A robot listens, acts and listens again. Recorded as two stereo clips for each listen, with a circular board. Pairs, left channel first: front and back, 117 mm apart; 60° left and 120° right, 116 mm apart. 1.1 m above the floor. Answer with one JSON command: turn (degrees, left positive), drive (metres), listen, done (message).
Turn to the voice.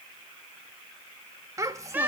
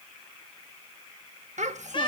{"turn": -115}
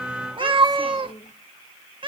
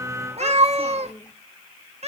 {"done": "Found it: a child speaking, straight ahead."}